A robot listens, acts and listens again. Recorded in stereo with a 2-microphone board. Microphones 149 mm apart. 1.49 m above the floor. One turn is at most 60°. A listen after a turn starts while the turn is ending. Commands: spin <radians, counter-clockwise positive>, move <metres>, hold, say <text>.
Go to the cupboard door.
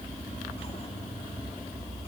hold
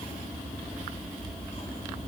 hold
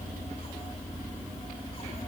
say I can't make out a cupboard door.